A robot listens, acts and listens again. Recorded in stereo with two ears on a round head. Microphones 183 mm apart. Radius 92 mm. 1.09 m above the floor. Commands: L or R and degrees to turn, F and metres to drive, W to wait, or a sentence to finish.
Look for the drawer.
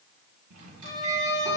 R90
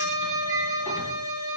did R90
W
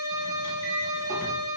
W
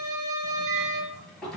Facing the drawer.